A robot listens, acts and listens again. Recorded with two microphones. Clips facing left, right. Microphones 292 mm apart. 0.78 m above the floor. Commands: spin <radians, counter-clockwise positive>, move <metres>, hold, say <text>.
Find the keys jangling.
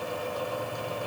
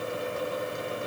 hold
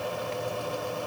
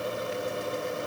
hold
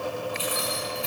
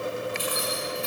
spin -0.96
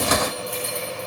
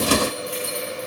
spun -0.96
spin -1.31
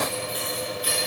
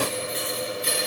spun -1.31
spin -0.52
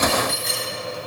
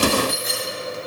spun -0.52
say Found it: keys jangling, straight ahead.